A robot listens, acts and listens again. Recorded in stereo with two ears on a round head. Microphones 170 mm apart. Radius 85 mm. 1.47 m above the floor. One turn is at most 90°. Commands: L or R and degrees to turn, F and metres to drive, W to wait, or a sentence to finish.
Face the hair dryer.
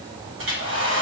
R75
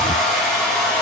Found it: a hair dryer, straight ahead.